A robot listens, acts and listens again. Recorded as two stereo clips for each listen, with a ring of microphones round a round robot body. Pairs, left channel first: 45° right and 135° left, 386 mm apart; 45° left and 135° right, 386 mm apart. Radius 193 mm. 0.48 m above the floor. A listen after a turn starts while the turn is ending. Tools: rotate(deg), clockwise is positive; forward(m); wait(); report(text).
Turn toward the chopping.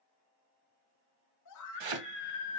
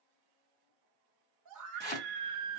rotate(-130)
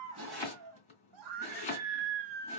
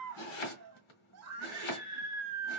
rotate(-30)
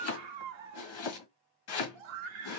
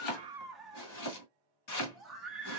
report("Facing the chopping.")